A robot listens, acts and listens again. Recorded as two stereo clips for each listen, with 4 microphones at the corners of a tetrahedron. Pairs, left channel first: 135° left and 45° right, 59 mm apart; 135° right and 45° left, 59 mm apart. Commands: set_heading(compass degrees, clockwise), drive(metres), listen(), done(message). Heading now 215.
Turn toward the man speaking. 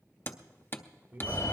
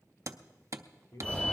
set_heading(315)
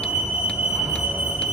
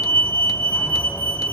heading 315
listen()
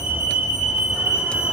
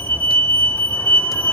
listen()
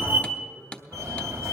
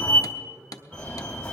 set_heading(285)
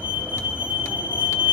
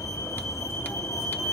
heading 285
listen()
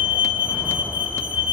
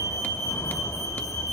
listen()
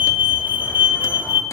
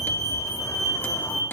done("Facing where the man speaking came from. I can't hear it now.")